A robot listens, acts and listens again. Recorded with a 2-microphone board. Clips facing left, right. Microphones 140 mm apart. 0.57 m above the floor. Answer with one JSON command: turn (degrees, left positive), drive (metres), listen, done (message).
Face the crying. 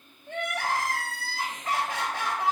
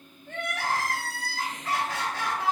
{"turn": 20}
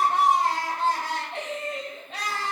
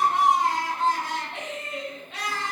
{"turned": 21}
{"turn": 140}
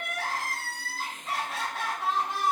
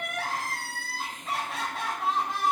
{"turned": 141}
{"done": "Found it: crying, straight ahead, 1 to 2 m away."}